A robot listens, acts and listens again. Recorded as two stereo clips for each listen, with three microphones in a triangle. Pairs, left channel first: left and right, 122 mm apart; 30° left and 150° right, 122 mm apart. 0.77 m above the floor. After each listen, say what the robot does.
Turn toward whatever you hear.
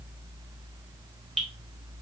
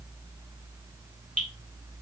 Facing the dripping.